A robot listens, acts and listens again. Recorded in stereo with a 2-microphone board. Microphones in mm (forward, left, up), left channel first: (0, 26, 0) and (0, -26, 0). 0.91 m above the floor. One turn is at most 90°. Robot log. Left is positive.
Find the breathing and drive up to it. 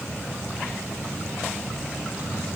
cmd idle
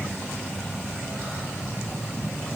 cmd idle
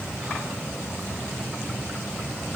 end: I can't make out breathing to turn to.